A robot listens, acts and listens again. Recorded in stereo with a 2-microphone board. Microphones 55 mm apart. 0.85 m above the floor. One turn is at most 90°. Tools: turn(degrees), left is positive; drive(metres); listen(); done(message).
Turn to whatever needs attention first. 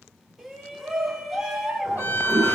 turn(degrees=-30)
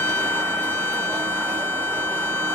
listen()
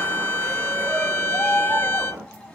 turn(degrees=25)
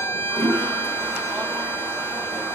listen()
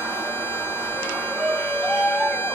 done("Facing the shout, 1 to 2 m away.")